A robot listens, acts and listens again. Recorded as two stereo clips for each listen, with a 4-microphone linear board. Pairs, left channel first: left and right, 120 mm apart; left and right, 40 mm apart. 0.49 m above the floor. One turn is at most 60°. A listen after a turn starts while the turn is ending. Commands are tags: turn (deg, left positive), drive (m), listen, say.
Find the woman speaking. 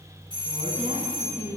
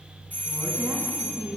<turn deg="-60"/>
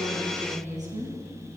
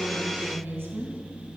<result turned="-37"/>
<turn deg="-60"/>
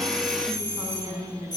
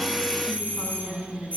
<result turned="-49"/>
<turn deg="-35"/>
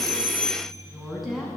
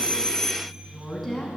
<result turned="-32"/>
<say>Facing the woman speaking.</say>